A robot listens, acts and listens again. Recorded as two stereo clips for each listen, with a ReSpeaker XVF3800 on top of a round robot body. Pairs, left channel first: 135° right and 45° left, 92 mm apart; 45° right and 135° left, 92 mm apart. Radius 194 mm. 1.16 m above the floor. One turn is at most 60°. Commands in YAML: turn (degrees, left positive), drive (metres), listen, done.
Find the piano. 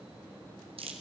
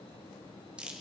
listen: true
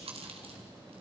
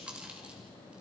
listen: true
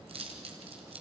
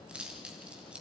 done: "I can't make out a piano to turn to."